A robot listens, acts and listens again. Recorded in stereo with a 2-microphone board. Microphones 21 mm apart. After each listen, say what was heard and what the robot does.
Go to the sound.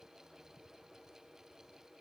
Keep listening.
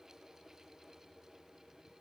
Keep listening.
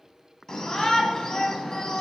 The shout: about 30° left or 150° left. Turn 30° left.
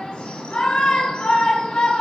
So it is at 115° left. Turn 115° left.
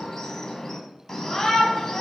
The shout is now 25° left. Turn 25° left.
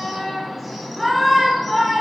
Drive 1.0 m forward.
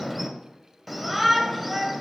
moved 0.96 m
Drive 1.0 m forward.
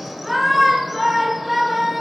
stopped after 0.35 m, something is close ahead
The shout is now 10° right. Turn 10° right.
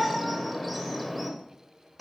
Arrived at the shout, straight ahead.